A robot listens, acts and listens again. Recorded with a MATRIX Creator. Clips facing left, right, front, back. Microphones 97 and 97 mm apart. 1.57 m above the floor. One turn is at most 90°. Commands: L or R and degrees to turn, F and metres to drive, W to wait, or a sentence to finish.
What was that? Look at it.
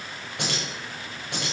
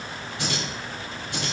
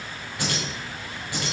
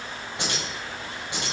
L90
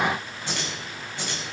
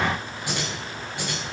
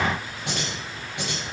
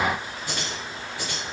R10
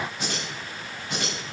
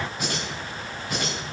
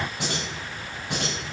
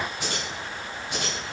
Found it: keys jangling, straight ahead, over 4 m away.